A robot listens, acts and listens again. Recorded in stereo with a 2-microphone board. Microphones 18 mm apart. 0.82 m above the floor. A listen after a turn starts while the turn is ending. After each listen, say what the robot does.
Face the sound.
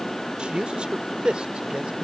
Turn 90° right.
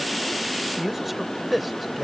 Facing the man speaking.